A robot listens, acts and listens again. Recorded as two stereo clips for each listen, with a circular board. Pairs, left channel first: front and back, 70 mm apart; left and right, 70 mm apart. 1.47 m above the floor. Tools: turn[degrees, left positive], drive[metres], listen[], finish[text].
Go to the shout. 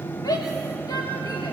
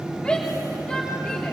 Thought: The shout: 15° left.
Action: turn[15]
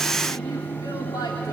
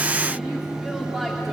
Action: drive[1.0]
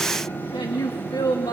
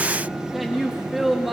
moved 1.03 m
Action: drive[1.0]
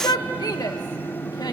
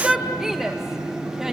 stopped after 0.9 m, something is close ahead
Thought: The shout is now 10° right.
Action: turn[-10]
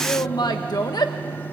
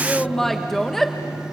Action: finish[I am next to the shout.]